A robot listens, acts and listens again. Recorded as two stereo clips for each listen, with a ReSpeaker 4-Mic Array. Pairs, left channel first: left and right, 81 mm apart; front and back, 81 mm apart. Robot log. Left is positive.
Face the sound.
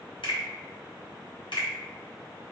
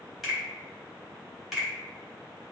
note: The finger snap: 90° left.
cmd yaw +90
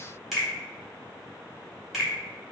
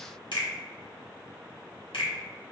end: Found it: a finger snap, straight ahead.